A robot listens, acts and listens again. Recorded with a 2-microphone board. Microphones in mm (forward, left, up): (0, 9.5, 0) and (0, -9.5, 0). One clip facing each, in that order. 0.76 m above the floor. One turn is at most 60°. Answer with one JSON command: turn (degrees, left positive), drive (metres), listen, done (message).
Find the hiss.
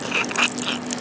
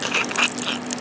{"listen": true}
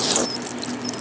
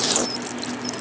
{"listen": true}
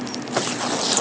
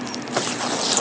{"done": "I can't make out a hiss."}